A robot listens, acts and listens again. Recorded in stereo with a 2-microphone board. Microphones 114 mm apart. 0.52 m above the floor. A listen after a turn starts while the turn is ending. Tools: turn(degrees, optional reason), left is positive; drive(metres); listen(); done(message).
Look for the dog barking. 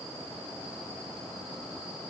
listen()
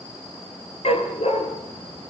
turn(degrees=65, reason="The dog barking: about 65° left or 115° left.")
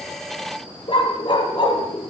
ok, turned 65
turn(degrees=50, reason="So it is at 50° left.")
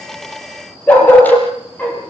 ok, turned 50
turn(degrees=15, reason="The dog barking is now 15° left.")
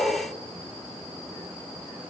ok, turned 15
listen()
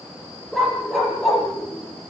done("Found it: a dog barking, straight ahead, over 4 m away.")